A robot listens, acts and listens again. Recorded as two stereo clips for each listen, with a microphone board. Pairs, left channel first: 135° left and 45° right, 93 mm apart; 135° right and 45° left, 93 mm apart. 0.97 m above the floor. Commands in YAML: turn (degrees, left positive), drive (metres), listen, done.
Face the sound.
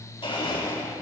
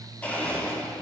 turn: 150
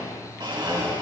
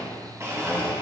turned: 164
turn: -15
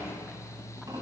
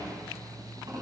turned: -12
done: "Facing the blender."